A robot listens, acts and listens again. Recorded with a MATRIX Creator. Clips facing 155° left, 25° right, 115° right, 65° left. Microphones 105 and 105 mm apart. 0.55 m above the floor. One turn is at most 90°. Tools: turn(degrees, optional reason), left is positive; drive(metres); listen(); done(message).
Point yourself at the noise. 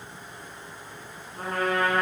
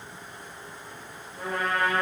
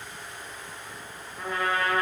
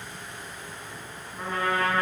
turn(degrees=90, reason="The trumpet: 125° left.")
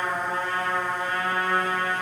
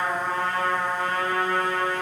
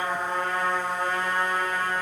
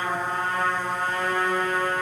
turn(degrees=25, reason="The trumpet is now 25° left.")
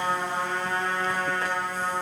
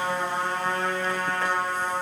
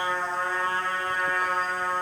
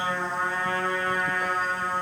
done("Facing the trumpet.")